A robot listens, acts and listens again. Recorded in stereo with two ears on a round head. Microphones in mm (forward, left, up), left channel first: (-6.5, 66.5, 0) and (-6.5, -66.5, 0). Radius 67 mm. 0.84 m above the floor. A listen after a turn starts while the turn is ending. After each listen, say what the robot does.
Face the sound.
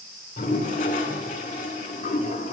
Turn 55° left.
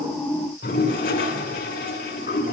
Turn 65° left.
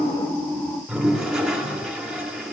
Found it: a toilet flushing, straight ahead.